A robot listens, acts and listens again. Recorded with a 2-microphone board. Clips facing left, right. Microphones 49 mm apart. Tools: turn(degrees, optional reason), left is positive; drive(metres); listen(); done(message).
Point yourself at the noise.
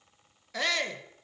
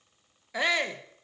turn(degrees=-15, reason="The shout: about 15° right or 165° right.")
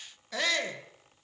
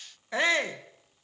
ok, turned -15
turn(degrees=-150, reason="So it is at 150° right.")
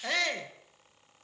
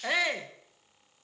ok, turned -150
turn(degrees=-15, reason="The shout is now 15° right.")
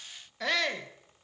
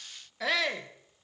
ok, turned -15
done("Facing the shout, 1 to 2 m away.")